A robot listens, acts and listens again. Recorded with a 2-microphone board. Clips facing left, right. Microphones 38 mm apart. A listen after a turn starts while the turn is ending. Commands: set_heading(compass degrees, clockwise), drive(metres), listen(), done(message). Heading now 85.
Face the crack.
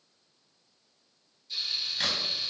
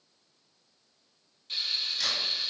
set_heading(45)
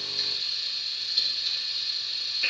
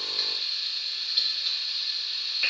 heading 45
listen()
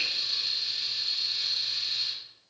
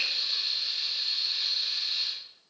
done("I heard a crack, but can't make it out now. It was about straight ahead or 100° left.")